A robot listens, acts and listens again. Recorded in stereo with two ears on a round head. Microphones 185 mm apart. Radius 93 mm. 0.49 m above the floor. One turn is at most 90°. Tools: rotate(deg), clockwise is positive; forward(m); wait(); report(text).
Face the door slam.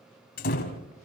rotate(-45)
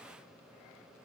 wait()
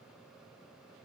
report("I heard a door slam, but can't make it out now. It was about straight ahead or 90° left.")